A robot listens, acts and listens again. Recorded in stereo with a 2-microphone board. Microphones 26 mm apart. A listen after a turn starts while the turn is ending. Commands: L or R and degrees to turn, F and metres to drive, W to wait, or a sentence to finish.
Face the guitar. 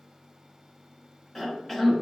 W
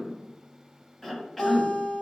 L70
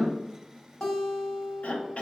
L25
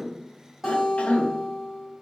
Facing the guitar, 1 to 2 m away.